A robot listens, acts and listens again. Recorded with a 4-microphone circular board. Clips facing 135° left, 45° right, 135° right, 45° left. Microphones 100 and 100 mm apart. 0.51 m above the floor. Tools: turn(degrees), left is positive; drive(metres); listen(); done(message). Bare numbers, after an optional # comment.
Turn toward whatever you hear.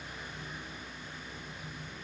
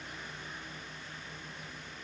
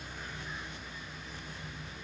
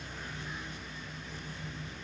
listen()
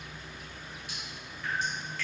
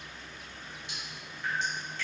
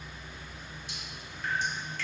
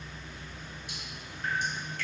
# The dripping: 15° left.
turn(15)
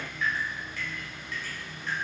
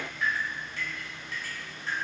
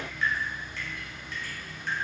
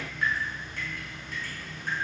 # The dripping is now 10° left.
turn(10)
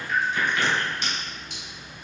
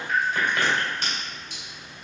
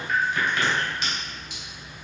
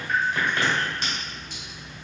done("Facing the dripping, 1 to 2 m away.")